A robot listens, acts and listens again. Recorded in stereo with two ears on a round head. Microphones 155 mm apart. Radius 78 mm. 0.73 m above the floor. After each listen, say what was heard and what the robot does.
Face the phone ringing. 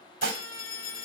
The phone ringing: about 60° left or 120° left. Turn 60° left.
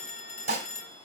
So it is at 55° left. Turn 55° left.
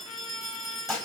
Facing the phone ringing, 1 to 2 m away.